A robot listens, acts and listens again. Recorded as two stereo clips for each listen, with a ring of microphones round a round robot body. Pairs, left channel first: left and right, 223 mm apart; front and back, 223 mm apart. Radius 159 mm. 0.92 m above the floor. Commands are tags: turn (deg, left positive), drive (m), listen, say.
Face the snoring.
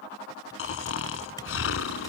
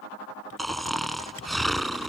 <turn deg="90"/>
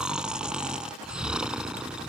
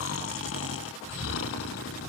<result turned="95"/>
<say>Found it: snoring, straight ahead.</say>